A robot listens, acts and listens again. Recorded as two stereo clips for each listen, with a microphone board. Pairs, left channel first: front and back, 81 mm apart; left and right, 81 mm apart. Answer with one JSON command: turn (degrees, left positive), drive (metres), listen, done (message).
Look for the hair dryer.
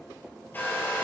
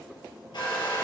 {"turn": 65}
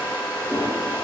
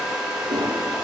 {"turn": -10}
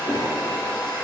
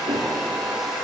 {"done": "Found it: a hair dryer, straight ahead, 2 to 4 m away."}